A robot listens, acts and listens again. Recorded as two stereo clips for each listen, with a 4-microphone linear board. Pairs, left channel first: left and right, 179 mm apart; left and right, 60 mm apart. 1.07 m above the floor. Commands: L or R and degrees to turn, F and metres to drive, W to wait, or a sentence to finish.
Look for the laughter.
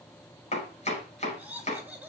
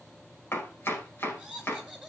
R30
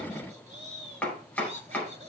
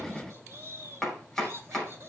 R135
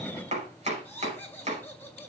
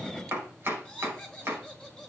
L10
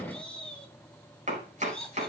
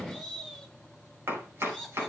Found it: laughter, straight ahead, over 4 m away.